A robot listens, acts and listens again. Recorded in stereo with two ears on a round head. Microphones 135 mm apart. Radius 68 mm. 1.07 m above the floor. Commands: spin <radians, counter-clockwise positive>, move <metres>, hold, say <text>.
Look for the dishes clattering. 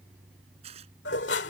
spin 1.57
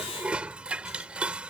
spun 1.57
say Found it: dishes clattering, straight ahead.